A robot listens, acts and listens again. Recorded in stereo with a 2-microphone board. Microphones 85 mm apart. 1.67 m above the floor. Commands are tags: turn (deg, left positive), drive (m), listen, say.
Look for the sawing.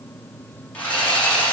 <turn deg="15"/>
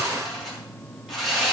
<say>Found it: sawing, straight ahead.</say>